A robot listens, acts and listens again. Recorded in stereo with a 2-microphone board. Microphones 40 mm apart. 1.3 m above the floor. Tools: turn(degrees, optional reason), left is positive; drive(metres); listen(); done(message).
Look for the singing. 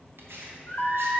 turn(degrees=40, reason="The singing: about 40° left or 140° left.")
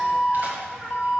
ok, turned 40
turn(degrees=-10, reason="So it is at 10° right.")
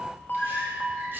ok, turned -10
done("Found it: singing, straight ahead, 2 to 4 m away.")